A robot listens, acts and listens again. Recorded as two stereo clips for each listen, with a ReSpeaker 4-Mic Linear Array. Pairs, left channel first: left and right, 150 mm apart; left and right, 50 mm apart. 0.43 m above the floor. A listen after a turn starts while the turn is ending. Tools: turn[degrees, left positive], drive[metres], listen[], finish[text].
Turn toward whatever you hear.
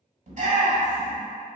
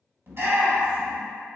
Thought: The shout: about 55° right or 125° right.
Action: turn[-55]
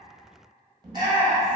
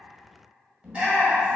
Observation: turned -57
Thought: So it is at 35° right.
Action: turn[-35]
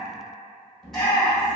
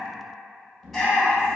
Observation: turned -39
Action: finish[Found it: a shout, straight ahead, 1 to 2 m away.]